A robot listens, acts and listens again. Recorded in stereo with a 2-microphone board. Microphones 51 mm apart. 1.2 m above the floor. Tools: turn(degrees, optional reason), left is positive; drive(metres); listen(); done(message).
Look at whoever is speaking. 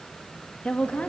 turn(degrees=30, reason="The woman speaking: about 30° left or 150° left.")
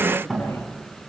listen()
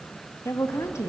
turn(degrees=105, reason="So it is at 105° left.")
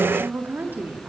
turn(degrees=-45, reason="The woman speaking is now 45° right.")
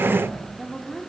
done("Facing the woman speaking.")